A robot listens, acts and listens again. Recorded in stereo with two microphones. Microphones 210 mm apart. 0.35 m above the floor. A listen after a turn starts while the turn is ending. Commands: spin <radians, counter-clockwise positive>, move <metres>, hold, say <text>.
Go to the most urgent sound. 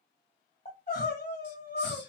spin 0.79
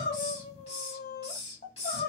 spin 1.31
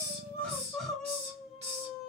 move 1.0
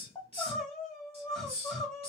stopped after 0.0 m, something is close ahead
say Blocked. The crying is further on, straight ahead.